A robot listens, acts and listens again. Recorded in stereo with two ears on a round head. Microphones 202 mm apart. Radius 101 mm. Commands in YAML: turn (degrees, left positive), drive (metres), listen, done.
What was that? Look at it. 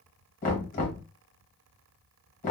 turn: 40
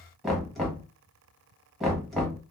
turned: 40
done: "Facing the knocking, 1 to 2 m away."